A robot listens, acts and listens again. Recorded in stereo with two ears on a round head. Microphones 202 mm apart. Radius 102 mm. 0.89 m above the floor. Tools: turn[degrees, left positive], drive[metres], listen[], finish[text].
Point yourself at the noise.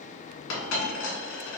Thought: The dropped coin: about 60° left or 120° left.
Action: turn[60]
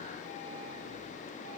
Action: listen[]
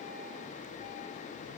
Action: finish[I heard a dropped coin, but can't make it out now. It was about straight ahead or 60° left.]